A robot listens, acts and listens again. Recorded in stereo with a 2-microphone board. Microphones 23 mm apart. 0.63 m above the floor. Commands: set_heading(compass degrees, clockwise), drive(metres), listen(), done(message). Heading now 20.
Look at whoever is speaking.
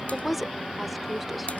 set_heading(50)
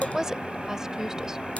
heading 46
set_heading(201)
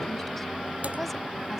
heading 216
set_heading(201)
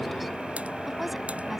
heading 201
listen()
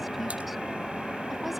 done("I heard a woman speaking from this way, but can't make it out now.")